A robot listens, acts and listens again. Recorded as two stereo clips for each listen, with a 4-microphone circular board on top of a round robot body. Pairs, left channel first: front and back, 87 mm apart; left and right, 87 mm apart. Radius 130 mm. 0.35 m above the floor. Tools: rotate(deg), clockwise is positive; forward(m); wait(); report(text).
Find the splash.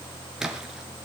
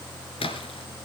rotate(-100)
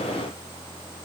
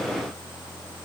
report("I heard a splash from this way, but can't make it out now.")